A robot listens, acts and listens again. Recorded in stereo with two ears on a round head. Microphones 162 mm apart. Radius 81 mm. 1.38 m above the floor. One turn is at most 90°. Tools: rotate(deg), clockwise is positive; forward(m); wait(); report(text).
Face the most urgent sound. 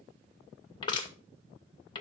wait()
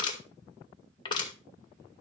wait()
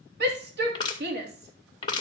rotate(65)
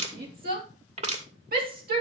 rotate(50)
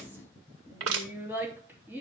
rotate(10)
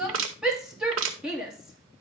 report("Facing the shout.")